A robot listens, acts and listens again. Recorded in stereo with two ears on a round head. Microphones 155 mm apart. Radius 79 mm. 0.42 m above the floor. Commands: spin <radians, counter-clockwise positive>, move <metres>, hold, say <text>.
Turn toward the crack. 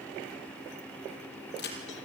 spin 1.05
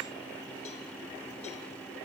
hold
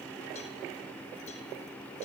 say I heard a crack, but can't make it out now. It was about straight ahead or 60° left.